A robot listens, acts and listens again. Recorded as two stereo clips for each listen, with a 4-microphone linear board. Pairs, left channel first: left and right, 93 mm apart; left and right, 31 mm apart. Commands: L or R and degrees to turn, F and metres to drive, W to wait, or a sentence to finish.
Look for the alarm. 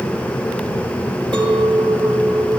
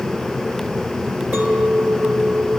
W
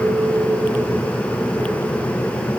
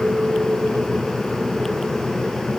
W
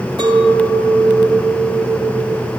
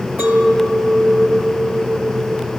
I can't make out an alarm, only a clink.